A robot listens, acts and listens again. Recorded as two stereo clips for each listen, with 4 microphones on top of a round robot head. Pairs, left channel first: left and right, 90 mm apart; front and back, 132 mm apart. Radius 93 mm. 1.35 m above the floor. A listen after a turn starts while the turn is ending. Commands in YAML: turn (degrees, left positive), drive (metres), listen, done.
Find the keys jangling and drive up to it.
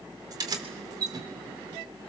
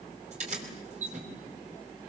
turn: -135
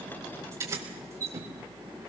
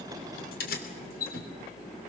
turn: -20
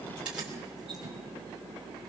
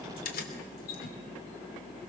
drive: 1.0
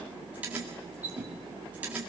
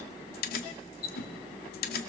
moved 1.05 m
turn: -10
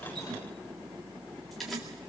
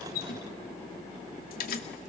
drive: 1.0
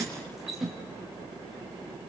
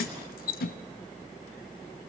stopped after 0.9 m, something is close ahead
done: "Arrived at the keys jangling, straight ahead."